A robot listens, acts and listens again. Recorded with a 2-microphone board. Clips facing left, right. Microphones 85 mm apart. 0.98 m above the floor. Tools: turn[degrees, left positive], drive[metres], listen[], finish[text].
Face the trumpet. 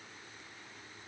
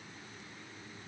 Action: listen[]
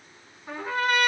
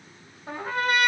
Thought: The trumpet: about 55° right or 125° right.
Action: turn[-55]
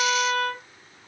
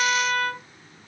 Thought: So it is at 65° right.
Action: turn[-65]
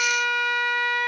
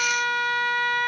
Action: finish[Found it: a trumpet, straight ahead, 1 to 2 m away.]